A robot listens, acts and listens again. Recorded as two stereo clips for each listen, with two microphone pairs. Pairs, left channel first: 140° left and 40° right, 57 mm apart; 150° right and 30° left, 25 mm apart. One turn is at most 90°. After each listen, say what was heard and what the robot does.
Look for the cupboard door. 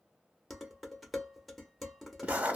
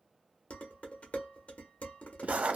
Keep listening.
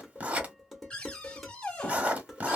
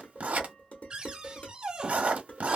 The cupboard door: 70° left. Turn 70° left.
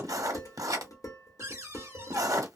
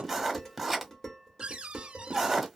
Found it: a cupboard door, straight ahead, under 1 m away.